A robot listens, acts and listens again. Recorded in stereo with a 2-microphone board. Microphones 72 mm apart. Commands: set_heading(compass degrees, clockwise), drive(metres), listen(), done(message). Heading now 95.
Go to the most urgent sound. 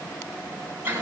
listen()
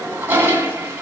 listen()
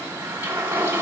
done("I can't make out anything urgent to turn to.")